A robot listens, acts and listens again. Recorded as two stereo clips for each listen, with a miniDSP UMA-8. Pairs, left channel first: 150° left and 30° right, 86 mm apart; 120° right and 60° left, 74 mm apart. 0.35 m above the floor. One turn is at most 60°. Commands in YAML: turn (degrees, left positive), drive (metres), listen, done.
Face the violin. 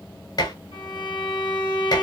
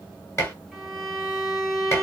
turn: 60
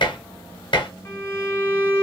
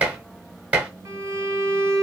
turn: 60
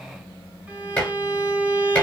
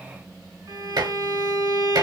turn: 45
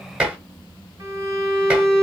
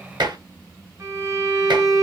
turn: 15
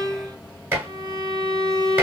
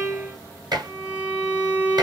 done: "Facing the violin, 2 to 4 m away."